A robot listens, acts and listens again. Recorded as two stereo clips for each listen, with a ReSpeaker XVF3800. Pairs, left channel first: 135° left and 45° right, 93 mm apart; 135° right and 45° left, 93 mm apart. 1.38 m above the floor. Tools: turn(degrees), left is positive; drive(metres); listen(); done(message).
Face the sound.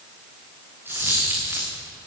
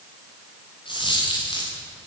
turn(degrees=-110)
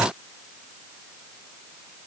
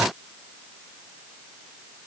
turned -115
done("Facing where the dropped coin came from. I can't hear it now.")